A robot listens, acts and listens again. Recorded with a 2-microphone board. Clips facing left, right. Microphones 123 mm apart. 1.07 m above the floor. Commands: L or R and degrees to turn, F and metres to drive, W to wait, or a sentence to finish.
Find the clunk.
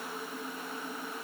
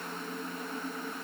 W
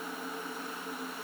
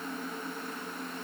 W
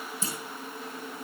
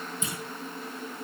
L35
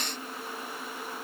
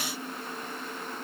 W
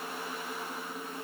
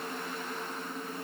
I heard a clunk, but can't make it out now. It was about straight ahead or 110° left.